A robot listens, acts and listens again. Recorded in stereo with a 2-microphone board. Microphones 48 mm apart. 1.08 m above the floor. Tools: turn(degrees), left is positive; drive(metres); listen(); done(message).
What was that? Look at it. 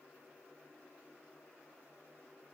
listen()
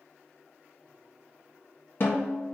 turn(degrees=50)
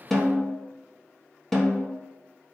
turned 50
done("Found it: a snare drum, straight ahead, 1 to 2 m away.")